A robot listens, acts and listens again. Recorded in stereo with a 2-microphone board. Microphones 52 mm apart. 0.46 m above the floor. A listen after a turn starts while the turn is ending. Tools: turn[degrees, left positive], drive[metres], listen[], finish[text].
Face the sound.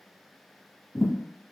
Thought: The thud: about 15° left or 165° left.
Action: turn[15]
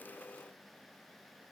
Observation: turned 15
Action: listen[]
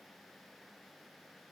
Action: finish[I heard a thud, but can't make it out now. It was about straight ahead or 150° left.]